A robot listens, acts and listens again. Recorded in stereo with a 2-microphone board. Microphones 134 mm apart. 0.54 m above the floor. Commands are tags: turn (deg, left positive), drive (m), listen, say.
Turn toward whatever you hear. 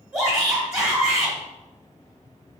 <turn deg="-20"/>
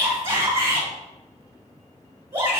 <turn deg="-140"/>
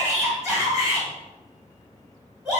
<turn deg="-10"/>
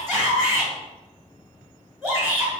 <say>Facing the shout.</say>